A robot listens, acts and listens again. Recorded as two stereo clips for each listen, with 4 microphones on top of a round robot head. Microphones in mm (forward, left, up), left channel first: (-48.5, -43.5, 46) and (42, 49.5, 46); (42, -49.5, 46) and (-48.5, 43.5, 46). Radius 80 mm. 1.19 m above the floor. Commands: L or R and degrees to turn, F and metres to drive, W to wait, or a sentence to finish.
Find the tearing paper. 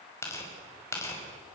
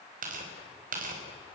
L155
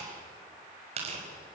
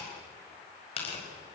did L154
Found it: tearing paper, straight ahead.